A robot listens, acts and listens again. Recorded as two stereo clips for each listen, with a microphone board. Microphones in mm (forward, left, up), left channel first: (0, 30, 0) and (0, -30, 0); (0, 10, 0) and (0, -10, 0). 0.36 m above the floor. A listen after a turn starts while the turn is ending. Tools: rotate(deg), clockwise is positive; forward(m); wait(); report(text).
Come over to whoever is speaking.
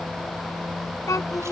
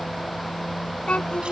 rotate(-60)
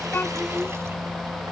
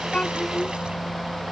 wait()
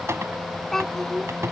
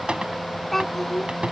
forward(1.0)
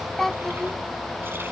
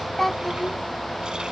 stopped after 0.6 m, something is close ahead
report("Something is in my way. I am facing the child speaking but have not reached it.")